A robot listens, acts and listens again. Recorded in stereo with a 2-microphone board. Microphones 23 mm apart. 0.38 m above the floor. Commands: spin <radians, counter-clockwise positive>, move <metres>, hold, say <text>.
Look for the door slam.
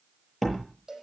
spin 0.52
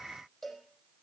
hold
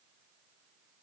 say I heard a door slam, but can't make it out now. It was about 25° right or 145° left.